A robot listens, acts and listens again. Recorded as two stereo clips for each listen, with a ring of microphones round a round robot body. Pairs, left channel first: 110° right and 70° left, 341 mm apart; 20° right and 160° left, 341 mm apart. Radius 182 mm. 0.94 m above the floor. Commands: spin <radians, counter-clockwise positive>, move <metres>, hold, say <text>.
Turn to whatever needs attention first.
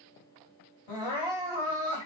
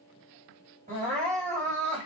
spin -2.27
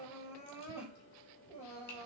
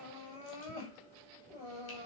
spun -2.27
spin -0.70
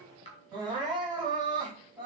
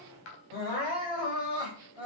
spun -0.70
spin -0.17
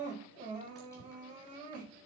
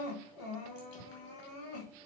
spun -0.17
say Facing the crying, over 4 m away.